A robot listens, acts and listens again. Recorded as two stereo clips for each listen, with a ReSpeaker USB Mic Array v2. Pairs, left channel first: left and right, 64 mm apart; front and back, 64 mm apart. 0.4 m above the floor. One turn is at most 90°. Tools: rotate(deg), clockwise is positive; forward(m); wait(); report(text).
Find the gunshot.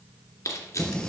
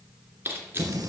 wait()
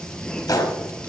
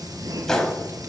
rotate(-80)
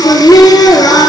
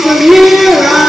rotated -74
report("Facing where the gunshot came from. I can't hear it now.")